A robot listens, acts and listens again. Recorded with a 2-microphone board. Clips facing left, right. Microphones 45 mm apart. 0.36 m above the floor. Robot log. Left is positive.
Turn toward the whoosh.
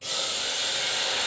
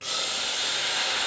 cmd idle
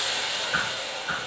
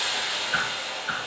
cmd yaw -30
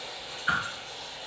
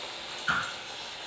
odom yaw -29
note: So it is at 15° left.
cmd yaw +15
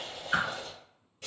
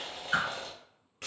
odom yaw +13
end: Facing the whoosh, 1 to 2 m away.